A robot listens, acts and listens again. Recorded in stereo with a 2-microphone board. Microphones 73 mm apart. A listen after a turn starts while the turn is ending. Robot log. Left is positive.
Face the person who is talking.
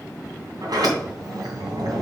cmd idle
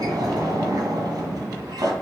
cmd idle
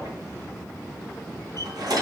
end: I can't make out anyone speaking, only a sliding door.